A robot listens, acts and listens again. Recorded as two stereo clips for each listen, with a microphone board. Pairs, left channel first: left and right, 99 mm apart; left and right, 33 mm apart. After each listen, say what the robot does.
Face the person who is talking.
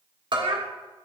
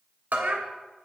Turn 65° right.
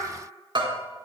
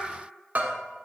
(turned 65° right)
Keep listening.
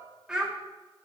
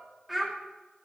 Turn 10° right.
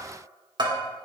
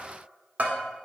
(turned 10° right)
Keep listening.
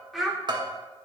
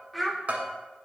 Facing the child speaking, 1 to 2 m away.